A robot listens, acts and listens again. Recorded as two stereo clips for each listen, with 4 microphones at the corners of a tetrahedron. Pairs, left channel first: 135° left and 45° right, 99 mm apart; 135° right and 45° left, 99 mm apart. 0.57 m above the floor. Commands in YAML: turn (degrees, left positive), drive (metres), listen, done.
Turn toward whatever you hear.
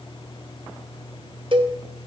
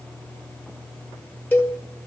turn: -65
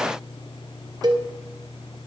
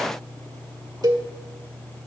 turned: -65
done: "Found it: a cowbell, straight ahead."